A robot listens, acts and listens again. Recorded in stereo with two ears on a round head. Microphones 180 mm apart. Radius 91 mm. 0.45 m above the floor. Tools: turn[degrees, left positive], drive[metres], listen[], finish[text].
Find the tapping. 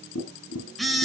Action: turn[90]
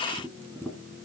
Action: finish[Facing the tapping, 2 to 4 m away.]